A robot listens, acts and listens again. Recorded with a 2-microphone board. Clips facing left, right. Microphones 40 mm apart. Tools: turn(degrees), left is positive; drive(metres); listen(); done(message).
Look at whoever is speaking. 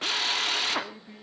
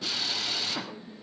turn(degrees=60)
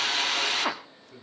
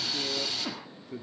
turn(degrees=-15)
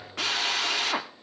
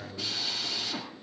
done("Found it: a man speaking, straight ahead, 2 to 4 m away.")